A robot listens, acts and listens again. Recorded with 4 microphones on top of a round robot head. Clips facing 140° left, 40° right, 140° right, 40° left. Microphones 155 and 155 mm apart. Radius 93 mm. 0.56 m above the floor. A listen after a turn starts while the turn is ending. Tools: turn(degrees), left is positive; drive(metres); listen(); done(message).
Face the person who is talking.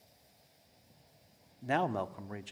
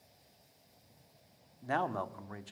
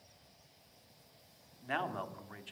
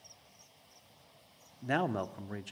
turn(degrees=70)
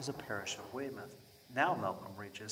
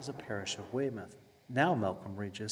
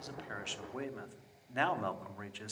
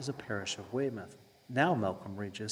done("Facing the man speaking.")